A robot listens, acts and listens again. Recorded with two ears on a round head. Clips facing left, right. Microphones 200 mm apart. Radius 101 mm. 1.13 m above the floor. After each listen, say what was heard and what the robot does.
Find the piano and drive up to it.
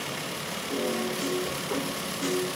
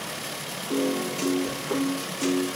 The piano: about 45° right or 135° right. Turn 45° right.
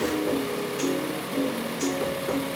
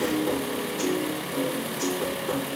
Drive 1.0 m forward.
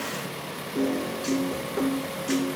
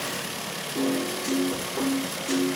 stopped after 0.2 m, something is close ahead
Something is in my way. I am facing the piano but have not reached it.